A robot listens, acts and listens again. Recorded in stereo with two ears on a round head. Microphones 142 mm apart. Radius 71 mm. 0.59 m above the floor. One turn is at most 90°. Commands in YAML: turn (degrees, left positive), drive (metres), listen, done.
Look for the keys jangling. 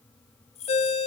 turn: 45
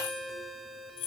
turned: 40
turn: 90
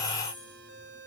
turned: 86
turn: 10
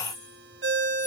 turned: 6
listen: true
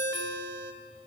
done: "I heard keys jangling from this way, but can't make it out now."